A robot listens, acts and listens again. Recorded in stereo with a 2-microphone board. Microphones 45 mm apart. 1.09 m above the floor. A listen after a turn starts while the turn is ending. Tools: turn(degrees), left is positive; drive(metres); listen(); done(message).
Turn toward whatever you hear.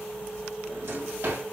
turn(degrees=-70)
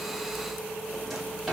done("Facing the drawer, 2 to 4 m away.")